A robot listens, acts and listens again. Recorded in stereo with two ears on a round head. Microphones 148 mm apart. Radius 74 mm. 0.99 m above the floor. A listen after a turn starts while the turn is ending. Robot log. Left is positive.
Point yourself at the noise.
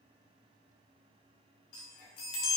note: The chime: about 60° left or 120° left.
cmd yaw +60
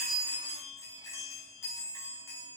note: So it is at 20° left.
cmd yaw +20
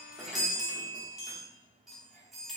end: Found it: a chime, straight ahead, under 1 m away.